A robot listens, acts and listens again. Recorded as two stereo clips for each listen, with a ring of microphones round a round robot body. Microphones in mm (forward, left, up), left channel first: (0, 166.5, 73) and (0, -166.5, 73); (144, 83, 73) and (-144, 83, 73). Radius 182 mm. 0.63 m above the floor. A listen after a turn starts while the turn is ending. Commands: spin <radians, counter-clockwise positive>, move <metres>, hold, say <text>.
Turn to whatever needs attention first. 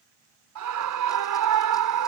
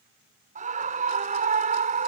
spin -2.01
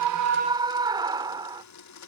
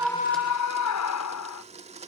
spin -0.26
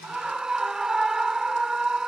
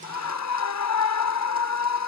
say Facing the scream.